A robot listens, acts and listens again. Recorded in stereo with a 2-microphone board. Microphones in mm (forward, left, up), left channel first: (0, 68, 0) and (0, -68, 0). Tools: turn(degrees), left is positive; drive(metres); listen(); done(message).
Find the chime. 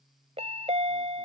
turn(degrees=-55)
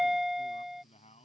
done("Facing the chime.")